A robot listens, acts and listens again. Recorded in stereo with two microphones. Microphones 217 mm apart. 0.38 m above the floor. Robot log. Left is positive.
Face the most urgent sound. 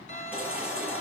cmd yaw -30
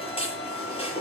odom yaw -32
note: So it is at 25° left.
cmd yaw +25
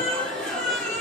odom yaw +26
end: Facing the baby crying.